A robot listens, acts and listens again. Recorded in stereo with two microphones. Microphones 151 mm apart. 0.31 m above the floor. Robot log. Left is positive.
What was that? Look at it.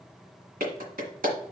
note: The clap: about 70° right or 110° right.
cmd yaw -70
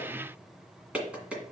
note: So it is at 10° right.
cmd yaw -10
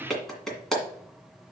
end: Found it: a clap, straight ahead, 1 to 2 m away.